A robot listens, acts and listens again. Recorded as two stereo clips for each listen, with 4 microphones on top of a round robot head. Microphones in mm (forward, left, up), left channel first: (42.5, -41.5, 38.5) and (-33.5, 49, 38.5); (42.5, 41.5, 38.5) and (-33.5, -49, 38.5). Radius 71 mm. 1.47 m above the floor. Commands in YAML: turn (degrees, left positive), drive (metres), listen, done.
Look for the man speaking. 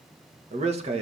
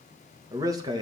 turn: 175
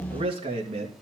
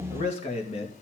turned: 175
turn: 90
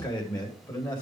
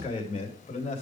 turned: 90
turn: 10
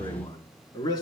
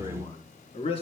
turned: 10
done: "Found it: a man speaking, straight ahead, over 4 m away."